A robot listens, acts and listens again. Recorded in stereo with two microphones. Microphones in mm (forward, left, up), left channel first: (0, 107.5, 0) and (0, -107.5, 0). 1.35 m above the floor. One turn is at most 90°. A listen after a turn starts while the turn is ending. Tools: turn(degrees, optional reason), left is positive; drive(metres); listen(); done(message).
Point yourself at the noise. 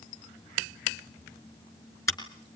turn(degrees=30)
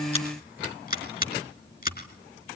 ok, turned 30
turn(degrees=90, reason="So it is at 135° left.")
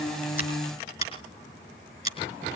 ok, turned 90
turn(degrees=30, reason="The scissors is now 30° left.")
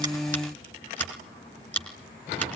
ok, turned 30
turn(degrees=10, reason="The scissors is now 10° left.")
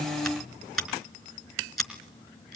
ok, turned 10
done("Found it: scissors, straight ahead, 2 to 4 m away.")